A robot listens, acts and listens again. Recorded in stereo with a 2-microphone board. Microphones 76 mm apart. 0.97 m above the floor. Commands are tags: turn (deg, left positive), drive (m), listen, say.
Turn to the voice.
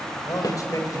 <turn deg="50"/>
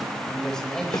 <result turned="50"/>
<say>Found it: a man speaking, straight ahead.</say>